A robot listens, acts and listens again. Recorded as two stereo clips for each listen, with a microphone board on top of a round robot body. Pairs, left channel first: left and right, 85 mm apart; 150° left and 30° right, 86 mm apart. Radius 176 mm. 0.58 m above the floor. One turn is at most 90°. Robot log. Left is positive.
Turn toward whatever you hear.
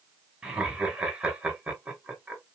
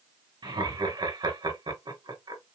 note: The laughter: 15° right.
cmd yaw -15
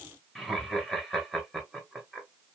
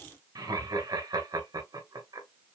end: Facing the laughter, 2 to 4 m away.